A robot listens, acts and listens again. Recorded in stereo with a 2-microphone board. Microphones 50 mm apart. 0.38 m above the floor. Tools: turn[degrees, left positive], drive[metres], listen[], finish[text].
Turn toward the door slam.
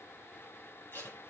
Action: listen[]
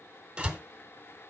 Thought: The door slam: about 20° right or 160° right.
Action: turn[-20]
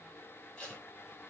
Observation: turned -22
Action: listen[]
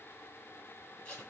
Action: finish[I heard a door slam, but can't make it out now. It was about straight ahead or 135° right.]